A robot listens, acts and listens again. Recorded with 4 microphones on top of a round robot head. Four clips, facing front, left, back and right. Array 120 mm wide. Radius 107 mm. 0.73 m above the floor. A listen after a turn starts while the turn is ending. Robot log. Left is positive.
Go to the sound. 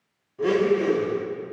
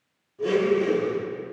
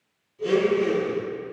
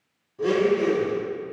note: The blender: 15° right.
cmd yaw -15
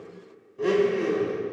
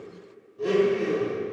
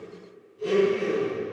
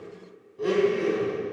cmd fwd 1.0
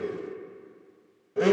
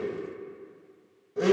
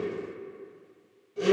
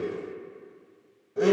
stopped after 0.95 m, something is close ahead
end: Arrived at the blender, straight ahead.